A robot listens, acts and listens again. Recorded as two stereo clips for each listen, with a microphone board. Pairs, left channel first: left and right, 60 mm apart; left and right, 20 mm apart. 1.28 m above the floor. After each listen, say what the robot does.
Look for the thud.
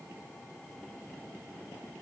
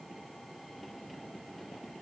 Keep listening.
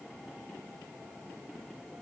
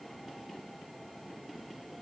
Keep listening.
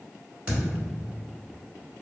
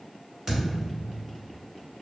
Turn 25° right.
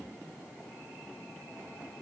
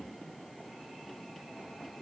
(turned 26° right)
Keep listening.
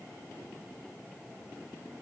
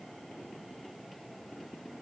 I heard a thud, but can't make it out now. It was about straight ahead or 130° right.